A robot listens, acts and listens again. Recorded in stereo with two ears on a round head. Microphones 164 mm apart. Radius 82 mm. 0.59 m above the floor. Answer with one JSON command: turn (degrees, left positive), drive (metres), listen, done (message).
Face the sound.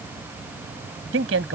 {"turn": -90}
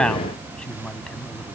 {"done": "Facing the man speaking."}